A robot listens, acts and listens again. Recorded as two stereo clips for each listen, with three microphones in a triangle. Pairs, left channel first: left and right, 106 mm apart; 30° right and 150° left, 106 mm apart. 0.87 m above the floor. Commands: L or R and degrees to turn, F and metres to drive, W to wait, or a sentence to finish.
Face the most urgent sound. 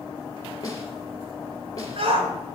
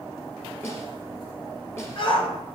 R65
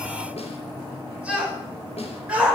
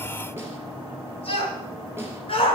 R10
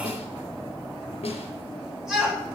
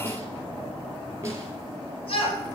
Facing the shout.